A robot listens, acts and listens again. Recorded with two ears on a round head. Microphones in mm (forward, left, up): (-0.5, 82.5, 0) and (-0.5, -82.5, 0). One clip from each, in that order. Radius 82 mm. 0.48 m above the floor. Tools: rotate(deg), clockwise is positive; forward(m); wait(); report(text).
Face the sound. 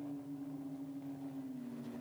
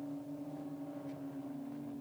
wait()
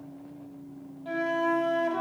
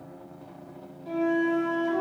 rotate(-45)
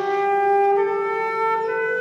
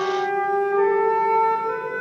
rotate(-90)
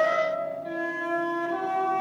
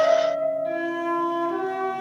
rotate(10)
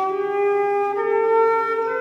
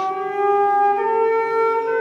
report("Found it: a flute, straight ahead.")